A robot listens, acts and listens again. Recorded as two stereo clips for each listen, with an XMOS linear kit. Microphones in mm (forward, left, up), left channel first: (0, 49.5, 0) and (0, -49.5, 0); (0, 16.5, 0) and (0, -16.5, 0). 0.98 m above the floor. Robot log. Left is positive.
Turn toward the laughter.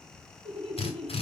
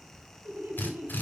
cmd yaw -90
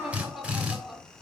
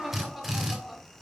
end: Found it: laughter, straight ahead.